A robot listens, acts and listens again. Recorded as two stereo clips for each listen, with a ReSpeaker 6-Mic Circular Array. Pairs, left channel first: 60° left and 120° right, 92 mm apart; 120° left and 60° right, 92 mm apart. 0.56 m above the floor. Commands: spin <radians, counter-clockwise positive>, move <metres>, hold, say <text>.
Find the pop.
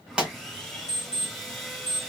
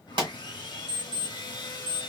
spin -0.70
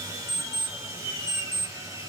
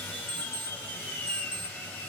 say Facing where the pop came from. I can't hear it now.